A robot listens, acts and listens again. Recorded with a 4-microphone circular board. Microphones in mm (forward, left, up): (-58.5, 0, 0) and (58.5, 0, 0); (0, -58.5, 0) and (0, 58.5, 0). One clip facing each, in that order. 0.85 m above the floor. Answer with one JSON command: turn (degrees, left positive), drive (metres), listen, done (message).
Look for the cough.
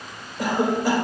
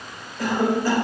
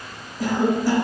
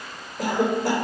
{"turn": 105}
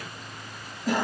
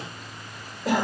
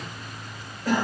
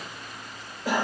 {"turn": 15}
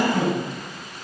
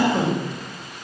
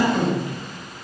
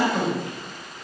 {"done": "Facing the cough, 2 to 4 m away."}